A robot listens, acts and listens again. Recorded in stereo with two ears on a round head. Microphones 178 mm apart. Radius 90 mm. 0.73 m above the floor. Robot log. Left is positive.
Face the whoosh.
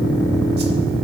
cmd idle
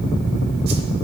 cmd idle
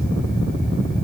end: I can't make out a whoosh to turn to.